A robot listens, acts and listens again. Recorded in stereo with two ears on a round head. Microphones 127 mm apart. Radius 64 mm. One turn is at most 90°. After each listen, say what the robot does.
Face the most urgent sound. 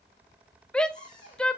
Turn 30° left.
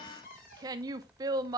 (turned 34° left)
Turn 25° right.
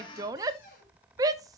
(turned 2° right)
Turn 25° right.
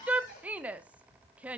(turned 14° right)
Turn 10° right.
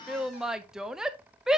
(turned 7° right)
Facing the shout.